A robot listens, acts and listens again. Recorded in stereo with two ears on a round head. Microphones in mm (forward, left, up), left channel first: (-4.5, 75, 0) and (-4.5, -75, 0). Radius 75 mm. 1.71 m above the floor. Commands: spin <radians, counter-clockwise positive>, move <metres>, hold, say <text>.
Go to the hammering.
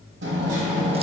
spin -1.57
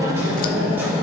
spin -0.17
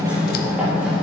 spin -0.17
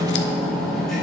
move 1.0
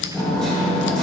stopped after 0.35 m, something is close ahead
say Blocked. The hammering is further on, straight ahead.